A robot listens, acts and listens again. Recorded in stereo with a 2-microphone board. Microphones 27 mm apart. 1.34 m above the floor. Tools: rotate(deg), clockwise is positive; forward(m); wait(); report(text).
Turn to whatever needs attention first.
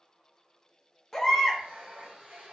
rotate(-15)
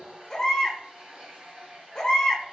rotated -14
rotate(-150)
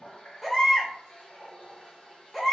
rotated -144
report("Found it: a baby crying, straight ahead, under 1 m away.")